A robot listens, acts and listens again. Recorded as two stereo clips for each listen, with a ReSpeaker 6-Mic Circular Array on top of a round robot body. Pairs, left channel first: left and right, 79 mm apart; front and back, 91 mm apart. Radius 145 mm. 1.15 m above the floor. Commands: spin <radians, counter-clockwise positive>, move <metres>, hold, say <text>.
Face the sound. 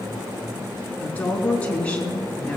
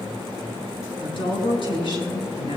spin 0.26
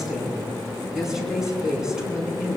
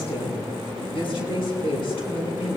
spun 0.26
spin -0.17
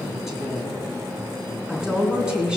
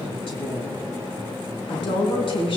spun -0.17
spin -0.17
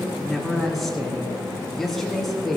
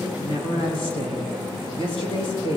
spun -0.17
say Found it: a woman speaking, straight ahead.